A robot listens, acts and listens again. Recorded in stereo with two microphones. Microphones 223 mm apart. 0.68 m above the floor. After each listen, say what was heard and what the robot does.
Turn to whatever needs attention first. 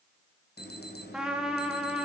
The alarm: about 50° left or 130° left. Turn 50° left.
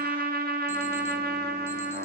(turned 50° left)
Keep listening.
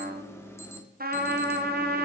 So it is at 15° left. Turn 15° left.
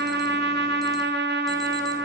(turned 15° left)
Keep listening.
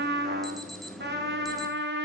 Facing the alarm, 1 to 2 m away.